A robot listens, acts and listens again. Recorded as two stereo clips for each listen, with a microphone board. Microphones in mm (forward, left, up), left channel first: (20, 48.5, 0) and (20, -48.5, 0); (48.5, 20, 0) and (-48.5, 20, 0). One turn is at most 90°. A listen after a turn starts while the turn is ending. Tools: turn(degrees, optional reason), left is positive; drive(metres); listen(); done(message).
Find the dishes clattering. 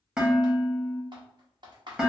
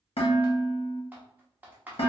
turn(degrees=-10, reason="The dishes clattering: 10° right.")
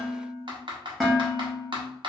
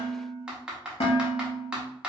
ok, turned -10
done("Facing the dishes clattering, 1 to 2 m away.")